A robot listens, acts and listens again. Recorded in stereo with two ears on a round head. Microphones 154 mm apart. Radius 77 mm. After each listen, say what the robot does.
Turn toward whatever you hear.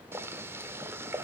Turn 30° right.
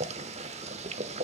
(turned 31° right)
Turn 130° right.
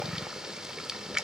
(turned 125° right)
Facing the boiling.